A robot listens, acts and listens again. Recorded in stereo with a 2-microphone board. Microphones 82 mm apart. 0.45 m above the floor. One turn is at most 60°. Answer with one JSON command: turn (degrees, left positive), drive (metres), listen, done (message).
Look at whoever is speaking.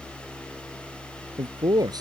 {"turn": -55}
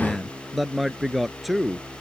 {"done": "Found it: a man speaking, straight ahead."}